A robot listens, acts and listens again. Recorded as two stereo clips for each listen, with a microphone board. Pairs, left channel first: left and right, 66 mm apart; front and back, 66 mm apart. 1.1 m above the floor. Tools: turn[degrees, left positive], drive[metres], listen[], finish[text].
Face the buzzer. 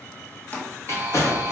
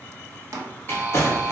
Thought: The buzzer: 130° right.
Action: turn[-130]
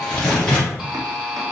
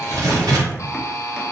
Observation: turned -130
Thought: The buzzer is now 10° right.
Action: turn[-10]
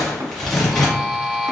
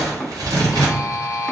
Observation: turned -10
Action: finish[Facing the buzzer.]